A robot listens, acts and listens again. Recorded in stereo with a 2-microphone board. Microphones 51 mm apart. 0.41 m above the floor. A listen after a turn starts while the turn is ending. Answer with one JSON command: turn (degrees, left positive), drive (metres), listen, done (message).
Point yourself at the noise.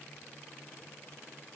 {"listen": true}
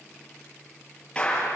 {"turn": 20}
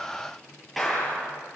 {"done": "Found it: a clap, straight ahead."}